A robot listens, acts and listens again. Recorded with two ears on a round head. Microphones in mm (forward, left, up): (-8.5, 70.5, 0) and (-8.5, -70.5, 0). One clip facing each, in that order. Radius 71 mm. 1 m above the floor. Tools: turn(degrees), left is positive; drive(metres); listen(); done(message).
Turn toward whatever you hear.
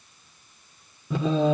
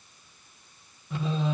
turn(degrees=90)
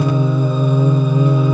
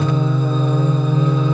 turn(degrees=15)
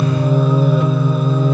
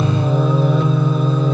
done("Facing the singing.")